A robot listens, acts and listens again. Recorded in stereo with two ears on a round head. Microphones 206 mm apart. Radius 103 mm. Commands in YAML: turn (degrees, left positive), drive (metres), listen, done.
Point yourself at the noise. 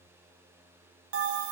turn: -60
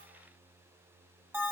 turn: -10
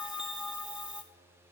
done: "Facing the bell."